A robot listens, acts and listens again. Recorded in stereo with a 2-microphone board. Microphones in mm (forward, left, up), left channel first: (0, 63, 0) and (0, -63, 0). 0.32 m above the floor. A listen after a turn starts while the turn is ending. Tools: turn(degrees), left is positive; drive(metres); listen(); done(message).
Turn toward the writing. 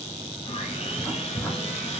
turn(degrees=20)
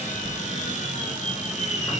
turn(degrees=140)
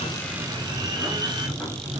done("Found it: writing, straight ahead.")